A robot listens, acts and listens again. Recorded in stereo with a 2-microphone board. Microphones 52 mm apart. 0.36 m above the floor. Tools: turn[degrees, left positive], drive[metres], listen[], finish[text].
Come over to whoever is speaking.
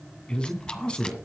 Thought: The man speaking: about 15° left or 165° left.
Action: turn[15]
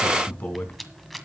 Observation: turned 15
Thought: So it is at 150° left.
Action: turn[150]
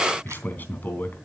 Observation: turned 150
Thought: The man speaking is now 40° left.
Action: turn[40]
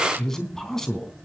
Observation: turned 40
Thought: The man speaking is now 10° left.
Action: turn[10]
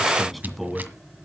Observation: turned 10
Action: drive[1.0]
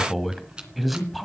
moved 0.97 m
Action: drive[1.0]
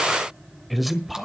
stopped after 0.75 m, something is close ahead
Action: finish[Arrived at the man speaking, straight ahead.]